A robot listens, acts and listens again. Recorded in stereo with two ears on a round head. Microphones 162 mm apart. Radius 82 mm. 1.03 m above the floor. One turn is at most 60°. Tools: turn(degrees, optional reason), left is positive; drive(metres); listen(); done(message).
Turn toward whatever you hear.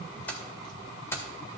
turn(degrees=15, reason="The keys jangling: about 15° left or 165° left.")
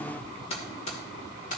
turn(degrees=60, reason="So it is at 135° left.")
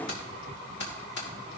turn(degrees=60, reason="The keys jangling is now 60° left.")
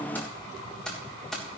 done("Facing the keys jangling, 2 to 4 m away.")